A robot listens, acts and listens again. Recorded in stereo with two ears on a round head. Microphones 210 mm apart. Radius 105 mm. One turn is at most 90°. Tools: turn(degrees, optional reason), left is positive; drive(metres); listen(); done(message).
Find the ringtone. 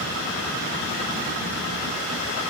listen()
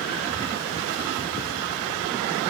listen()
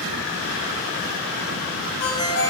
turn(degrees=45, reason="The ringtone: about 45° left or 135° left.")
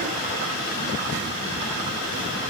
listen()
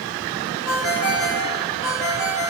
done("Found it: a ringtone, straight ahead.")